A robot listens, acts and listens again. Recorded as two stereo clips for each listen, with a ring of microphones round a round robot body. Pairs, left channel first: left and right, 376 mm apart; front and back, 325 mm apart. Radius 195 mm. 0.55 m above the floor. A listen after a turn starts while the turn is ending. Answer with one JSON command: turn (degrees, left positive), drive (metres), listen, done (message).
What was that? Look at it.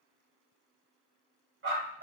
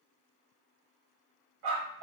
{"turn": -155}
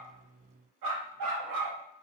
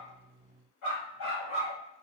{"turn": -55}
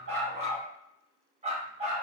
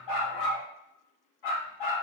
{"turn": -15}
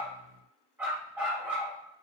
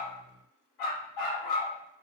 {"done": "Found it: a dog barking, straight ahead, 2 to 4 m away."}